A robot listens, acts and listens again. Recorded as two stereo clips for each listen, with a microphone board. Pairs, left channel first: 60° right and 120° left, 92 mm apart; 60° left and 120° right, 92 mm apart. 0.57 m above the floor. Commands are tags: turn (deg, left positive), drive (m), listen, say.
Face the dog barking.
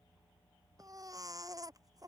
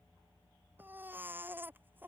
<listen/>
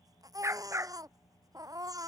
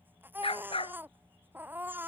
<turn deg="60"/>
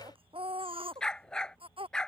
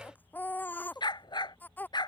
<turn deg="20"/>
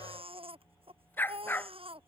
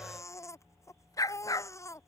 <turn deg="10"/>
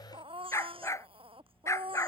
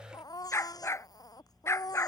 <say>Found it: a dog barking, straight ahead.</say>